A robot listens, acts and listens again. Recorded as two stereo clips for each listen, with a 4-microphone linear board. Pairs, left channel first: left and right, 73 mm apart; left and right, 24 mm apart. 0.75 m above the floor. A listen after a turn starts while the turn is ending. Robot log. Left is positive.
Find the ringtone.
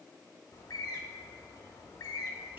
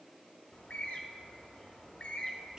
cmd idle
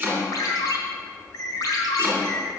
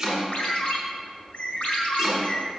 note: The ringtone: about 65° left or 115° left.
cmd yaw +65
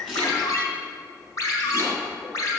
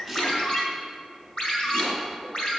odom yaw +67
note: So it is at 45° left.
cmd yaw +45
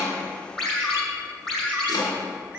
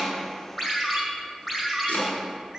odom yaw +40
end: Found it: a ringtone, straight ahead, 2 to 4 m away.